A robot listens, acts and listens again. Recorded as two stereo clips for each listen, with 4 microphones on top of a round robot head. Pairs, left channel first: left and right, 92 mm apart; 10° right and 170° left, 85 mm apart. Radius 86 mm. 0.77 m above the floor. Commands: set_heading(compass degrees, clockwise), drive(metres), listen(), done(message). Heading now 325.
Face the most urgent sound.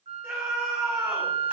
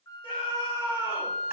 set_heading(340)
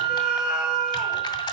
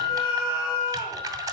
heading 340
listen()
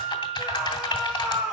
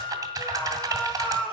done("Facing the scream, over 4 m away.")